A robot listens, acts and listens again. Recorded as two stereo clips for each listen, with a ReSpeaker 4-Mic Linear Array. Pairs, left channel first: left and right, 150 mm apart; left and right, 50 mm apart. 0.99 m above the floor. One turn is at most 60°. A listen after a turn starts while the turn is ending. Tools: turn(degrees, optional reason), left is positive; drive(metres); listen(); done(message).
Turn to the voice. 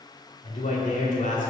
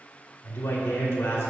turn(degrees=60, reason="The man speaking: about 60° left or 120° left.")
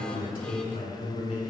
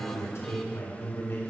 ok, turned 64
turn(degrees=55, reason="So it is at 55° left.")
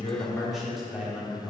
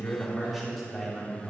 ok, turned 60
done("Facing the man speaking.")